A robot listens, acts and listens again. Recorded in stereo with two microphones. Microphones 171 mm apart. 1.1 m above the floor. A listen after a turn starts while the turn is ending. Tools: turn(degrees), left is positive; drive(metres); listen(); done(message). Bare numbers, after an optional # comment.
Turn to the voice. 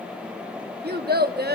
# The child speaking: about 70° right or 110° right.
turn(-70)
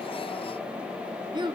# So it is at 30° right.
turn(-30)
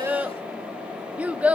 # The child speaking is now 10° right.
turn(-10)
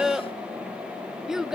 done("Found it: a child speaking, straight ahead, under 1 m away.")